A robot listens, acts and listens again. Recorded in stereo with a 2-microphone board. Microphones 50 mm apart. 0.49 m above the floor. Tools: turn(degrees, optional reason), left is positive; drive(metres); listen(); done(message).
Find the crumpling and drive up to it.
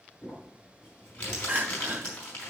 turn(degrees=25, reason="The crumpling: about 25° left or 155° left.")
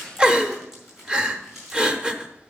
drive(metres=1.0)
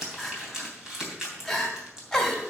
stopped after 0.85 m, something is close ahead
turn(degrees=-10, reason="The crumpling is now 10° right.")
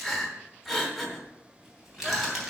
done("Blocked. The crumpling is further on, straight ahead.")